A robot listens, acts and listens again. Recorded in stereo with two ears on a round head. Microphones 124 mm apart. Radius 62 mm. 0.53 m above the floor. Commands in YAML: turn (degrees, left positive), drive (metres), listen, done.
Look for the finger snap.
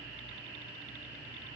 listen: true
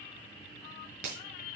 turn: -55
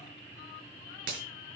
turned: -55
turn: -70
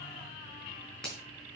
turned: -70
done: "Found it: a finger snap, straight ahead."